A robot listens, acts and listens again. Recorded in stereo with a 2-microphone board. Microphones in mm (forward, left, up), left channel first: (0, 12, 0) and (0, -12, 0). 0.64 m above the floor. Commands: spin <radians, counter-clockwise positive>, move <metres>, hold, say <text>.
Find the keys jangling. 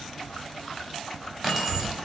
spin -0.52
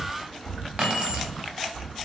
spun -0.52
spin -2.53
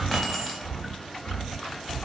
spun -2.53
hold
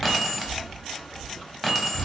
spin -0.17
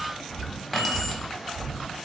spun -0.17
say Facing the keys jangling, under 1 m away.